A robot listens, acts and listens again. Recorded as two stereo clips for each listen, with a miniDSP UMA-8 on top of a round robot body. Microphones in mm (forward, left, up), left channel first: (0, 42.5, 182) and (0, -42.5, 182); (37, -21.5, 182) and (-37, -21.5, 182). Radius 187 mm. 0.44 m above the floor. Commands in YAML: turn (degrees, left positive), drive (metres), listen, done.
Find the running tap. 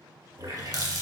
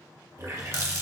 turn: -135
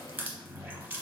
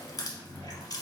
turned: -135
turn: -20
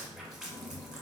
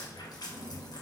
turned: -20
done: "Facing the running tap."